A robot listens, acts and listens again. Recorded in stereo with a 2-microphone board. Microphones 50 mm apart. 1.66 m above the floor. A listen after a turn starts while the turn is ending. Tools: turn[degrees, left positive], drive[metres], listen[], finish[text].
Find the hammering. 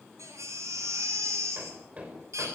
Thought: The hammering: about 25° right or 155° right.
Action: turn[-25]
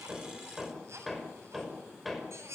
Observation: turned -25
Action: finish[Facing the hammering.]